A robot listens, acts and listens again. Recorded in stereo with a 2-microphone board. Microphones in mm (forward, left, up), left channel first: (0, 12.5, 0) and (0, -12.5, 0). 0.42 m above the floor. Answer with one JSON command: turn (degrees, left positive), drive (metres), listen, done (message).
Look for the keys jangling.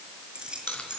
{"turn": -40}
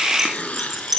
{"turn": -10}
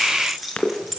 {"done": "Found it: keys jangling, straight ahead, over 4 m away."}